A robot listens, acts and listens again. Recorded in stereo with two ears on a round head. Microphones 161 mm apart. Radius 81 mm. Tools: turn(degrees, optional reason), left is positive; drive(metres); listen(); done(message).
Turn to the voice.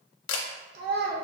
turn(degrees=-65, reason="The child speaking: about 65° right or 115° right.")
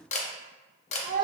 turn(degrees=-50, reason="So it is at 50° right.")
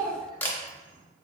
turn(degrees=-20, reason="The child speaking is now 20° right.")
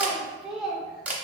done("Facing the child speaking.")